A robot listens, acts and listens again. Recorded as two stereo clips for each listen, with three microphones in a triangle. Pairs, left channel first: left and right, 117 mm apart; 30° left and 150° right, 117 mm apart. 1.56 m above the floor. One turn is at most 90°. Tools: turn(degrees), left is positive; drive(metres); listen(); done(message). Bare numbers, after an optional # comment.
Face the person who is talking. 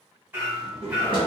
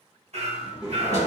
# The child speaking: 70° right.
turn(-70)
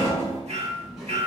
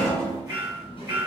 done("Facing the child speaking, 1 to 2 m away.")